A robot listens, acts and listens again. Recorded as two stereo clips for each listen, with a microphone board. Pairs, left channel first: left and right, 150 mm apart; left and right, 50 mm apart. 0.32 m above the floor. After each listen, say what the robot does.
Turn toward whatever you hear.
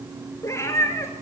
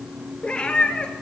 Turn 20° left.
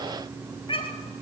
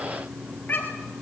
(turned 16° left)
Turn 35° left.
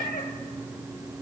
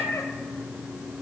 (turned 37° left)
Turn 110° left.
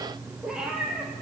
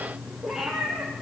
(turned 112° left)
Facing the cat meowing.